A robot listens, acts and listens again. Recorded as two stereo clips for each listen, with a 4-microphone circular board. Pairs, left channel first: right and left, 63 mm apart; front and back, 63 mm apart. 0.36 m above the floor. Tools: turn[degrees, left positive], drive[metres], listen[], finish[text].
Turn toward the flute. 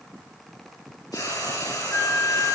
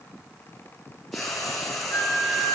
Thought: The flute: 55° right.
Action: turn[-55]
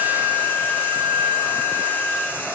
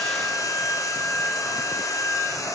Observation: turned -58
Action: finish[Facing the flute, 2 to 4 m away.]